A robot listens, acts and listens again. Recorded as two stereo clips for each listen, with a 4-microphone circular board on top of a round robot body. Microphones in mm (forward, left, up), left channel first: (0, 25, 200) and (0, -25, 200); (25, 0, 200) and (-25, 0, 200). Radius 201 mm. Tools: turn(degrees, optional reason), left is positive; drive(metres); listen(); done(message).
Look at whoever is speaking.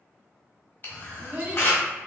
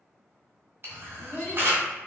turn(degrees=-35, reason="The child speaking: 35° right.")
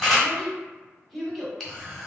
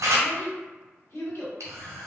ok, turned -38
done("Found it: a child speaking, straight ahead.")